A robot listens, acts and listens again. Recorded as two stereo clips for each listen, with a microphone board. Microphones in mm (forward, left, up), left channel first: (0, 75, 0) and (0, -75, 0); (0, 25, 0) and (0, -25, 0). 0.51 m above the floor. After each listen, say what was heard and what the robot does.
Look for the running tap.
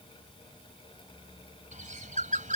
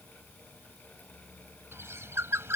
Keep listening.
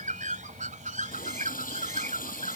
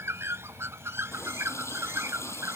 Turn 90° left.
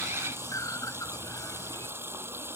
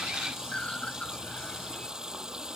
So it is at 15° right. Turn 15° right.
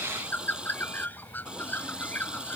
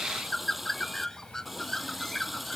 Found it: a running tap, straight ahead.